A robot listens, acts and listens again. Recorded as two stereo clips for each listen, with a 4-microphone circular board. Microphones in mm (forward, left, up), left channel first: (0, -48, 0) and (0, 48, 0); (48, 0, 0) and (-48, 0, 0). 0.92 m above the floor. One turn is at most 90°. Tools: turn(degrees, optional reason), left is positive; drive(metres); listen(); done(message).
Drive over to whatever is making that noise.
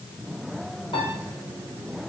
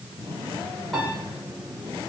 turn(degrees=-85, reason="The piano: 85° right.")
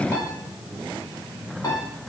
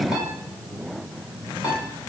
turn(degrees=-40, reason="The piano is now 40° right.")
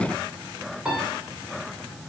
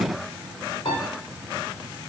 turn(degrees=10, reason="The piano is now 10° left.")
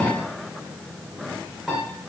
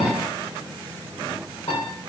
drive(metres=1.0)
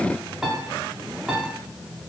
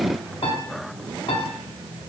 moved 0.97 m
drive(metres=1.0)
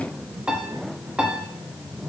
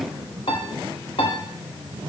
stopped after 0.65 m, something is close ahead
turn(degrees=10, reason="The piano is now 10° left.")
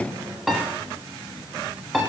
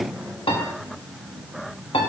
done("Arrived at the piano, straight ahead.")